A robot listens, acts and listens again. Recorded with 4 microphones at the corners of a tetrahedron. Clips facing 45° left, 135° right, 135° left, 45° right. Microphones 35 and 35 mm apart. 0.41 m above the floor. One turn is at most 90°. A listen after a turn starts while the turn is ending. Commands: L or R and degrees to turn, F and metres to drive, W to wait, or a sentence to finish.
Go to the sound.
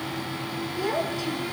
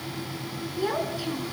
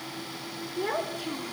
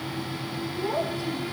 L90
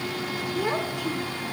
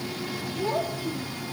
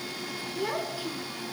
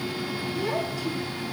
L65
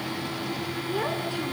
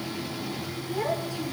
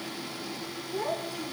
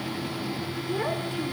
F1.0
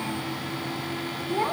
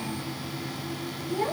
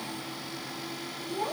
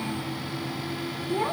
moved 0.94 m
F1.0
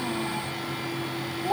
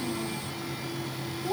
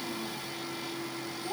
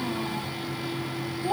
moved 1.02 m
F1.0
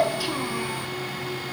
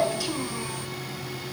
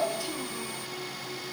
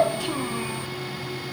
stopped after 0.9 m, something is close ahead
R25
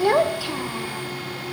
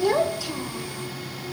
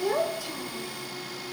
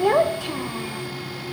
R15
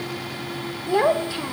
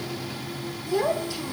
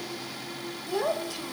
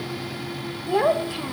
Arrived at the child speaking, straight ahead.